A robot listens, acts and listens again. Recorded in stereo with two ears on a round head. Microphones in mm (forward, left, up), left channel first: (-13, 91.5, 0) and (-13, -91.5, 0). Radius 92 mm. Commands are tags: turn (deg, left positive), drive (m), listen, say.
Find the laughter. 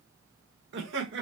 <turn deg="-65"/>
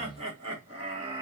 <turn deg="-20"/>
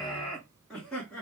<say>Facing the laughter, 2 to 4 m away.</say>